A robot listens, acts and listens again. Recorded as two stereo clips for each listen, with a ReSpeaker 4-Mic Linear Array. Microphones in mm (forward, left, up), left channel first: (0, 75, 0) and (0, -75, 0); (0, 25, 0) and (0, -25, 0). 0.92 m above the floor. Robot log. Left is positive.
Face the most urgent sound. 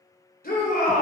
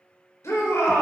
cmd yaw +90
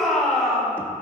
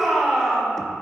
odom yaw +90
end: Facing the shout, 2 to 4 m away.